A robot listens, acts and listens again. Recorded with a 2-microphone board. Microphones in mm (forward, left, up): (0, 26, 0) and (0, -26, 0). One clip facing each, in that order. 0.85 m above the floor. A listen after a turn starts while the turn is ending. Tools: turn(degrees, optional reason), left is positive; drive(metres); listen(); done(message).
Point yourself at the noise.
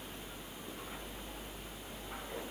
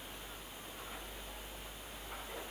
listen()
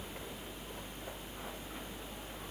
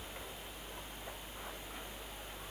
listen()
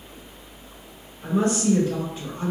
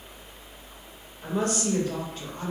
turn(degrees=-55, reason="The woman speaking: about 55° right or 125° right.")
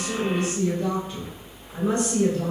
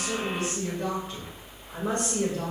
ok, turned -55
turn(degrees=-70, reason="So it is at 70° right.")
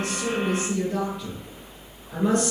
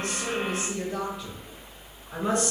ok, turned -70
done("Found it: a woman speaking, straight ahead.")